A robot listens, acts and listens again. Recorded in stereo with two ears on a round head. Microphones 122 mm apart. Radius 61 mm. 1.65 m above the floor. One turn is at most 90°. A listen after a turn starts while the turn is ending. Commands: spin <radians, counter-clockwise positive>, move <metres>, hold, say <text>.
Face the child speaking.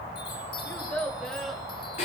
spin 0.52
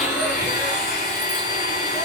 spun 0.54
hold
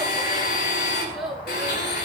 spin -0.52
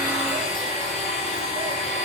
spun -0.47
hold
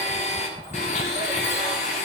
hold
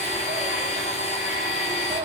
say I heard a child speaking, but can't make it out now. It was about 25° left or 150° right.